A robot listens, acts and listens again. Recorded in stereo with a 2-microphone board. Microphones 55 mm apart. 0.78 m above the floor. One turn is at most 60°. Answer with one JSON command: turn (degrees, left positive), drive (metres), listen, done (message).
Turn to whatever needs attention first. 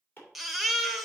{"turn": 30}
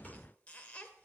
{"turn": 60}
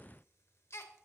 {"turn": 60}
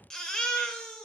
{"turn": 10}
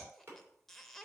{"listen": true}
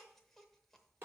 {"listen": true}
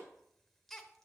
{"done": "Found it: a baby crying, straight ahead."}